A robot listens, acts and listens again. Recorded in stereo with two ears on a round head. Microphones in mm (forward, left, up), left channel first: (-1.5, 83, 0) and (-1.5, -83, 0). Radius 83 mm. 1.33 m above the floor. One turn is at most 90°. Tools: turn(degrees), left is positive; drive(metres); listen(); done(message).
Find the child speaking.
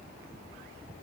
listen()
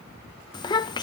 turn(degrees=25)
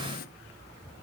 listen()
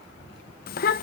turn(degrees=90)
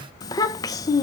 turn(degrees=20)
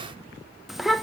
done("Facing the child speaking.")